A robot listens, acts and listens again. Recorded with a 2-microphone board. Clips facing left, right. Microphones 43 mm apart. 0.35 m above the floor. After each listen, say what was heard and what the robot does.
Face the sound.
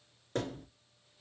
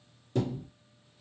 The thud: about 55° left or 125° left. Turn 55° left.
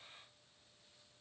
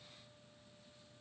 Keep listening.
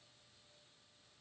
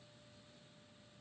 I heard a thud, but can't make it out now. It was about straight ahead or 70° left.